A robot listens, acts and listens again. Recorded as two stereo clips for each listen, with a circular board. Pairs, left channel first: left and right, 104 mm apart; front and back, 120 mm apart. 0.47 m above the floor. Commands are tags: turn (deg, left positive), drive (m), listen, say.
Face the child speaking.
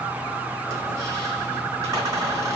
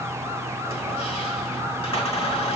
<listen/>
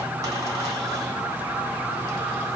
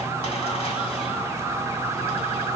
<listen/>
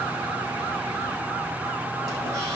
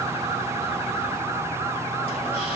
<say>I can't make out a child speaking.</say>